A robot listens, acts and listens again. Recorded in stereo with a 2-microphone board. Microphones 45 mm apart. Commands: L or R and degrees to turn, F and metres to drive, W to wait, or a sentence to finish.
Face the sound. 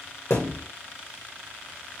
L90
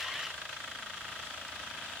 I heard a thud from this way, but can't make it out now.